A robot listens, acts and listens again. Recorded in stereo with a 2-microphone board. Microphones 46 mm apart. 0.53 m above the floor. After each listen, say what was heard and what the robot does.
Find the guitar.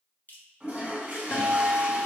The guitar: about 55° left or 125° left. Turn 55° left.
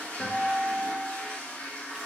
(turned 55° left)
So it is at 35° left. Turn 35° left.
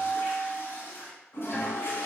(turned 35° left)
Found it: a guitar, straight ahead, under 1 m away.